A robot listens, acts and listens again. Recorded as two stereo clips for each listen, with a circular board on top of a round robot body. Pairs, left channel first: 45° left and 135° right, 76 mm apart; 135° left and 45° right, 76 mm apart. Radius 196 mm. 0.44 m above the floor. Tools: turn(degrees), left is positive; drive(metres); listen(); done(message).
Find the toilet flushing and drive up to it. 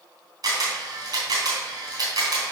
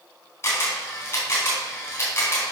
listen()
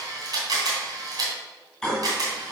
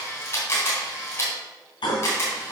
turn(degrees=130)
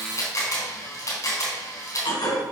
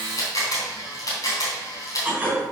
turn(degrees=30)
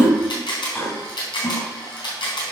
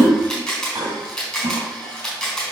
turn(degrees=-10)
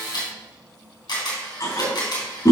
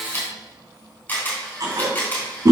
drive(metres=1.0)
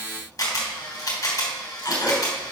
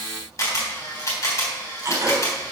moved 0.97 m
turn(degrees=10)
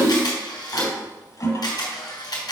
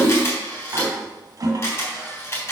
drive(metres=1.0)
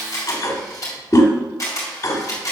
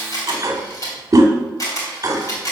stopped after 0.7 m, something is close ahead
done("I am next to the toilet flushing.")